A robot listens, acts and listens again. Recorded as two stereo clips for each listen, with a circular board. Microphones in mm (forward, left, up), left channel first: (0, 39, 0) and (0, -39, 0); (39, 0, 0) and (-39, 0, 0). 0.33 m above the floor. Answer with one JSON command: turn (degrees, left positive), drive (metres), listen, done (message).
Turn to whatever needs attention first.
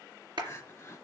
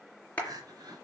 {"turn": 150}
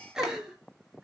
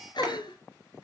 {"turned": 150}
{"turn": -10}
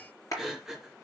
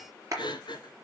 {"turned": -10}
{"done": "Found it: crying, straight ahead."}